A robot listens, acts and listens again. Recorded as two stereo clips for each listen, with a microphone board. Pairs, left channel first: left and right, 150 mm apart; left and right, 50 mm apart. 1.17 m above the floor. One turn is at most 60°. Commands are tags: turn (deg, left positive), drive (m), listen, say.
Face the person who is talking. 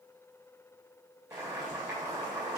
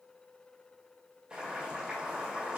<listen/>
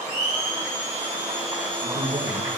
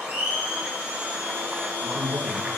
<turn deg="-60"/>
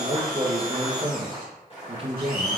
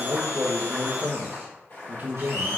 <turn deg="-40"/>
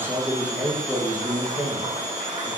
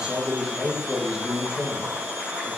<turn deg="-15"/>
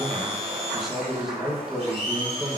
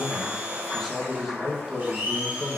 <say>Found it: a man speaking, straight ahead.</say>